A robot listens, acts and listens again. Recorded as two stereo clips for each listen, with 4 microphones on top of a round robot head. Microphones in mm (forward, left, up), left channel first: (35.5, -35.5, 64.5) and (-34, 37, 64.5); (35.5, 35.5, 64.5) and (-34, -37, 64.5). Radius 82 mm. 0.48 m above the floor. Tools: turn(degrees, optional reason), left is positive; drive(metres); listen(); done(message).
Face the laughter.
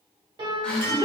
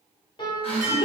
turn(degrees=35, reason="The laughter: 35° left.")
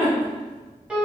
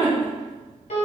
done("Found it: laughter, straight ahead, 1 to 2 m away.")